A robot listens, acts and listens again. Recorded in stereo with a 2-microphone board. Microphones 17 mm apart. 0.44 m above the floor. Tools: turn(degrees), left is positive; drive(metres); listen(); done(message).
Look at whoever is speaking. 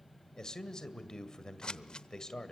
turn(degrees=35)
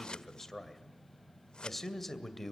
done("Found it: a man speaking, straight ahead, 2 to 4 m away.")